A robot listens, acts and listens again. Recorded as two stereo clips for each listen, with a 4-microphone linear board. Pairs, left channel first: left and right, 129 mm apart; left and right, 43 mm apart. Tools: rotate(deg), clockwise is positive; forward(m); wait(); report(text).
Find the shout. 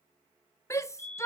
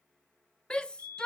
rotate(-20)
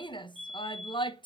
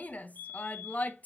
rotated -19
rotate(-145)
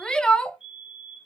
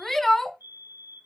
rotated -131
rotate(-10)
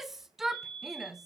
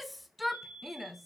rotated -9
report("Facing the shout, 1 to 2 m away.")